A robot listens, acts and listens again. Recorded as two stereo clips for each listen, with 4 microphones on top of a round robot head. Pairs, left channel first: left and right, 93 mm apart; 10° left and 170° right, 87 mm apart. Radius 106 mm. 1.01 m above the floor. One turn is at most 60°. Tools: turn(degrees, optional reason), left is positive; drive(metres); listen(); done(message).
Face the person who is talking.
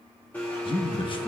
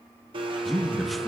turn(degrees=60, reason="The man speaking: 100° left.")
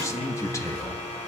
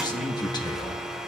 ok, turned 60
turn(degrees=40, reason="The man speaking is now 40° left.")
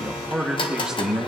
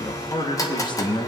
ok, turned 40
turn(degrees=-10, reason="The man speaking is now 10° right.")
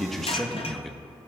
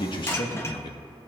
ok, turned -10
done("Facing the man speaking, 1 to 2 m away.")